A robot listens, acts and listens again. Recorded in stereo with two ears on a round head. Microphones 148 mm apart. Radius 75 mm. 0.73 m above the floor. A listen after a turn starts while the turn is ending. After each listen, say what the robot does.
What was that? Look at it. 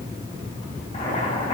Turn 35° left.
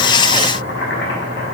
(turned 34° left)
Turn 110° left.
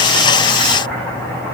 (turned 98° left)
Turn 10° left.
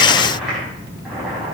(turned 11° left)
Facing the boiling, over 4 m away.